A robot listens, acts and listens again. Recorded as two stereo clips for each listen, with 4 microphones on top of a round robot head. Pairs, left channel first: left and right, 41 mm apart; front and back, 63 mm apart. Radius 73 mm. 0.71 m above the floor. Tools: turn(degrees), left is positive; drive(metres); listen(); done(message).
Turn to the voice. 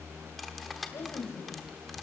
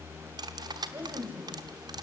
turn(degrees=120)
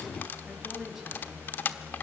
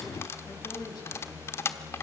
turn(degrees=-10)
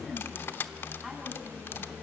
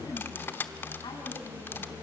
done("Found it: a woman speaking, straight ahead.")